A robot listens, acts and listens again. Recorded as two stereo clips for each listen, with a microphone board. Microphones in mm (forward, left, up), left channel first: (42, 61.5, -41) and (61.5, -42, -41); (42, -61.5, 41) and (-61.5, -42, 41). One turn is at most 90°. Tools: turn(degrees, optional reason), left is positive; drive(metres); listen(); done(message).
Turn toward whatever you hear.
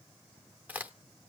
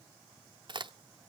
turn(degrees=-90, reason="The crack: 150° right.")
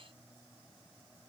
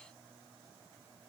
turn(degrees=-60, reason="Nothing new. It was at 60° right.")
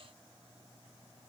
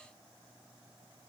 done("I heard a crack from this way, but can't make it out now.")